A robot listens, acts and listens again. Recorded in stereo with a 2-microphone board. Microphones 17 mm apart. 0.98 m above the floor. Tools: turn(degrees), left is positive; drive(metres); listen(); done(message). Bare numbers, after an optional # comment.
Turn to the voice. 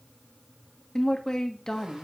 # The woman speaking: about 30° left or 150° left.
turn(30)
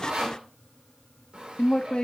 # So it is at 120° left.
turn(120)
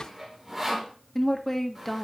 # The woman speaking is now 20° left.
turn(20)
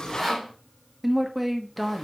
done("Found it: a woman speaking, straight ahead.")